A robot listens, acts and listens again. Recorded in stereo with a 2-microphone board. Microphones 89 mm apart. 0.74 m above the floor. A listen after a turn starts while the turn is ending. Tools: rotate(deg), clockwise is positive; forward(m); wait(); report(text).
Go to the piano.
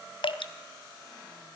wait()
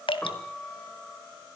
rotate(-30)
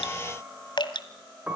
rotate(20)
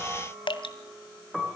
forward(1.0)
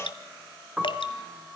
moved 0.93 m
forward(1.0)
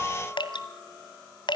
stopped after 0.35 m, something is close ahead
report("Blocked. The piano is further on, straight ahead.")